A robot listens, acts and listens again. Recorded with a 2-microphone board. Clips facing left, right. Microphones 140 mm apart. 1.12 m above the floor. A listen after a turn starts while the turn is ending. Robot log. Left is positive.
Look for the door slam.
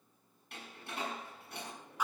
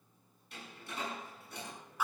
note: The door slam: about 65° left or 115° left.
cmd yaw +65
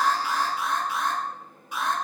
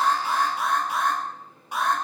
cmd idle
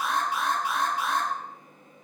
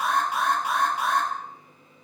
end: I heard a door slam, but can't make it out now. It was about straight ahead or 50° left.